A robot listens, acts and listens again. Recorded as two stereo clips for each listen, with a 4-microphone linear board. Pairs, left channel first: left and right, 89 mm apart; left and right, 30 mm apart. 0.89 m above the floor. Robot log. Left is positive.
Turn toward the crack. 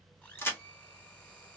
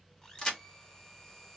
note: The crack: about 25° left or 155° left.
cmd yaw +25
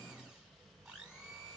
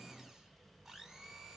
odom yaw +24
cmd idle
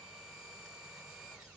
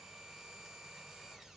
end: I heard a crack, but can't make it out now. It was about 5° left or 130° left.